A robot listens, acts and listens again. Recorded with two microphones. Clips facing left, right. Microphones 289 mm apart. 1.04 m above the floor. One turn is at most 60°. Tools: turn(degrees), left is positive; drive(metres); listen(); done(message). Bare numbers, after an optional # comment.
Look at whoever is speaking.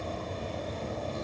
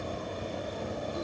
listen()
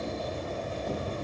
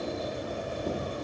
listen()
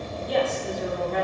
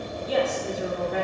turn(-30)
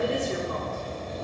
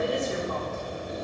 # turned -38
# So it is at 35° left.
turn(35)
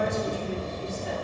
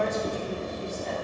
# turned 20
# The woman speaking is now 15° left.
turn(15)
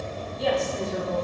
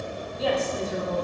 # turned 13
done("Facing the woman speaking.")